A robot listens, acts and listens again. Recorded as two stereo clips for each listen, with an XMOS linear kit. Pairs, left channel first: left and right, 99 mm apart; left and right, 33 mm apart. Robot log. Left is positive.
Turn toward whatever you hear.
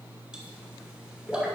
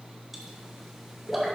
cmd yaw -30
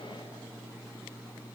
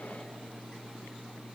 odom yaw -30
cmd idle
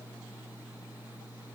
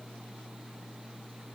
end: I heard a pop, but can't make it out now. It was about 20° left or 140° right.